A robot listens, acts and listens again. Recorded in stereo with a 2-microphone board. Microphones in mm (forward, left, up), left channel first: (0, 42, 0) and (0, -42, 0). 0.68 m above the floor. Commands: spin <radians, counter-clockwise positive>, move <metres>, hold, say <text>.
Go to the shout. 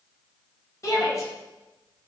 spin 0.70
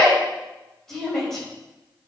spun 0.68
move 1.0
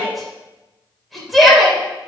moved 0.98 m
move 1.0
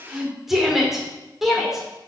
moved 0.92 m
move 1.0
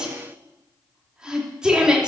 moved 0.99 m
spin -0.26
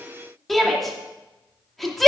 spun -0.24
move 1.0
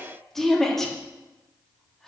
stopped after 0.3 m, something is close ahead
say Arrived at the shout, straight ahead.